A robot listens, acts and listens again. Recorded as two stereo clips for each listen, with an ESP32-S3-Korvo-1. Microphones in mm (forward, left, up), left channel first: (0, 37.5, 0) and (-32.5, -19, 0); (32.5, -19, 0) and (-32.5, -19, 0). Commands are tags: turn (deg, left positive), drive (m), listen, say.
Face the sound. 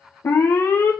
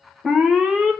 <turn deg="100"/>
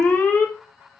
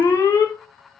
<say>Found it: an alarm, straight ahead.</say>